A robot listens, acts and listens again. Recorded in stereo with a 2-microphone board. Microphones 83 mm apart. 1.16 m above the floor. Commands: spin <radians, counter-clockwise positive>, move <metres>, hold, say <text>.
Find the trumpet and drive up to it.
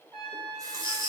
spin 0.52
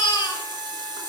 hold
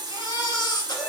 hold
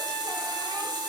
say I heard a trumpet, but can't make it out now. It was about 25° right or 145° left. I did not reach it.